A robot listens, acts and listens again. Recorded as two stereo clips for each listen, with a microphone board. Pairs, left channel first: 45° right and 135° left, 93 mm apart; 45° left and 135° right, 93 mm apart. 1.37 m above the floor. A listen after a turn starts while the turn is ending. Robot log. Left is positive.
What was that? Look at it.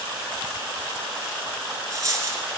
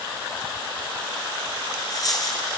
note: The dropped coin: 85° left.
cmd yaw +85
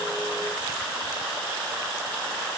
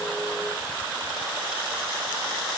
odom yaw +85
end: I heard a dropped coin from this way, but can't make it out now.